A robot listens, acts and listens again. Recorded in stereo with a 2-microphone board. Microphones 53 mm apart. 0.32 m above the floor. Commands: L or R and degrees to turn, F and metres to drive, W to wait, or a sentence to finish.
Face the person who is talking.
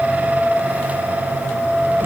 W
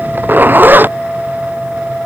W
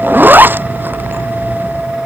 I can't make out anyone speaking to turn to.